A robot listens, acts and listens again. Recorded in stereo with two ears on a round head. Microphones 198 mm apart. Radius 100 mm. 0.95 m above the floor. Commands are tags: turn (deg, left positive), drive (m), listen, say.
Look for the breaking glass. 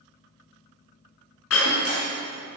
<turn deg="65"/>
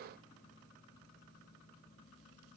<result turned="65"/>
<listen/>
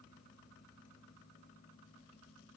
<say>I heard breaking glass, but can't make it out now. It was about straight ahead or 50° left.</say>